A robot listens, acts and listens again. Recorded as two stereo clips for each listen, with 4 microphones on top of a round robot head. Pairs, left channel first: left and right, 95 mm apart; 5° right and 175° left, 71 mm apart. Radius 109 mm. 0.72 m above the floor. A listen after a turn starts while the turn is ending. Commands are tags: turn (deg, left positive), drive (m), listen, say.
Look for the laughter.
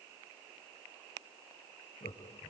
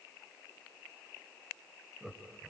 <turn deg="100"/>
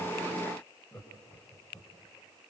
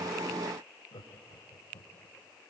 <turn deg="20"/>
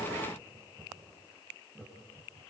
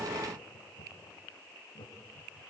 <say>Facing the laughter, over 4 m away.</say>